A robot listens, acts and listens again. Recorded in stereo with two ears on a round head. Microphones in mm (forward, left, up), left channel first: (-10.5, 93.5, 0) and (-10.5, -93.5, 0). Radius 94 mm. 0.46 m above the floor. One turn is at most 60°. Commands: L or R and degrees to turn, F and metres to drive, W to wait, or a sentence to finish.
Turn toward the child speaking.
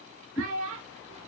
R60
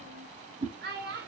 R50
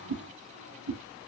W
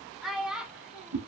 Found it: a child speaking, straight ahead.